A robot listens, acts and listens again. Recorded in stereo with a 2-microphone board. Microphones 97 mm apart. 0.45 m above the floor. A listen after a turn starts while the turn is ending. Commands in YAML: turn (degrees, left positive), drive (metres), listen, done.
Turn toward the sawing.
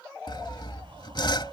turn: 55
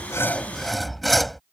done: "Found it: sawing, straight ahead."